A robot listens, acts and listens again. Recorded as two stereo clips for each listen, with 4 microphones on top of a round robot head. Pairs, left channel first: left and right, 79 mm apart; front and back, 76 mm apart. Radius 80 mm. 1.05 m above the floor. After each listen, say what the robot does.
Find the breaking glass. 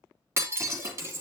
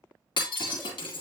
Turn 35° right.
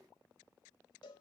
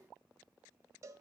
I heard breaking glass from this way, but can't make it out now.